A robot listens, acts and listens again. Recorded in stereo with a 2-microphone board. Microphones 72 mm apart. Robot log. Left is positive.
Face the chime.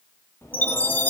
note: The chime: about 20° left or 160° left.
cmd yaw +20
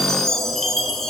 end: Facing the chime.